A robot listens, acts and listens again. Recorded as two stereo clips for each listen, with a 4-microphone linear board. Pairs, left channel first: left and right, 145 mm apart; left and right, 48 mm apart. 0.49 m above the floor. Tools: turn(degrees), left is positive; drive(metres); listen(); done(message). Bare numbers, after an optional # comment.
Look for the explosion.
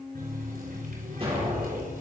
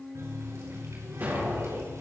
# The explosion: about 40° right or 140° right.
turn(-40)
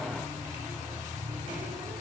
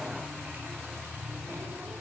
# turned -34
listen()
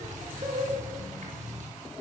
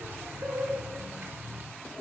done("I heard an explosion, but can't make it out now. It was about 5° right or 105° right.")